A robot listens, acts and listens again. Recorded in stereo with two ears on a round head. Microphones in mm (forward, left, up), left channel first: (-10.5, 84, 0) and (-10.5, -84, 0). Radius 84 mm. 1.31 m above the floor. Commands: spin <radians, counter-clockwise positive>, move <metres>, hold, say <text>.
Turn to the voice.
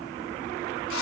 hold
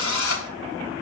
hold
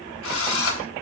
say I can't make out anyone speaking, only a drill.